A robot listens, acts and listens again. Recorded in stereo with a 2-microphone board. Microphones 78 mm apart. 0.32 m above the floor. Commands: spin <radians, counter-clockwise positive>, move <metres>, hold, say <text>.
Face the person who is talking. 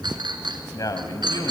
spin 0.96
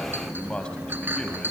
spin 0.26
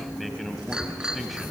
say Facing the man speaking.